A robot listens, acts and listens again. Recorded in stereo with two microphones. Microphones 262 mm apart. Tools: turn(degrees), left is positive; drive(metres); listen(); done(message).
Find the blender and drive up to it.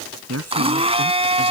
turn(degrees=-20)
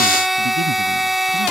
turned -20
drive(metres=1.0)
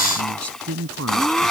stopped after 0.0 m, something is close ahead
done("Something is in my way. I am facing the blender but have not reached it.")